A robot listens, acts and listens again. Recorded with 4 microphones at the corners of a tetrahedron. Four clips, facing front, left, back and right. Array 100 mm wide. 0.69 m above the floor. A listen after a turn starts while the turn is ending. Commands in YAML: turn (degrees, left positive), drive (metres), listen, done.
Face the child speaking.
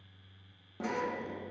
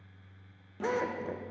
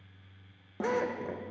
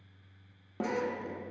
listen: true
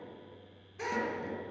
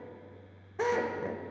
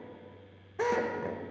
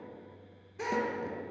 listen: true
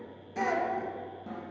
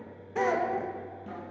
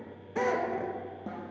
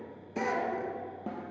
turn: 55
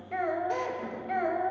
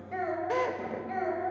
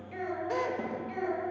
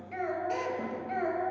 turn: -10
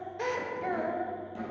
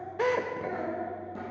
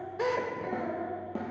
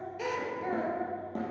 turn: -10
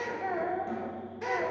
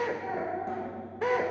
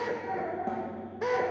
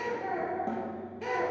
done: "Found it: a child speaking, straight ahead."